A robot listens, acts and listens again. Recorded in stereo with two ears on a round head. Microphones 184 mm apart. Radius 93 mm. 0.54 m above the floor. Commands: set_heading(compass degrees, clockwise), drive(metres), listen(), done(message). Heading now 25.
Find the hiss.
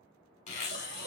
set_heading(70)
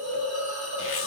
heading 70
set_heading(155)
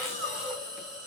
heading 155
done("Facing the hiss.")